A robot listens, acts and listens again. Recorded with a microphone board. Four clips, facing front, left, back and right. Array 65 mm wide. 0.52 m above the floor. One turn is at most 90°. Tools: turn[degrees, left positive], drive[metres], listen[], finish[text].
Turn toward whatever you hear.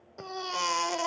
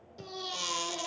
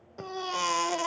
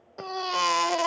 Thought: The baby crying: 95° right.
Action: turn[-90]
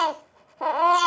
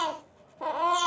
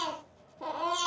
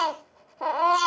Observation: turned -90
Thought: The baby crying is now 20° right.
Action: turn[-20]
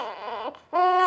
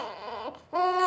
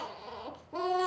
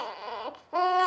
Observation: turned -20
Action: finish[Facing the baby crying.]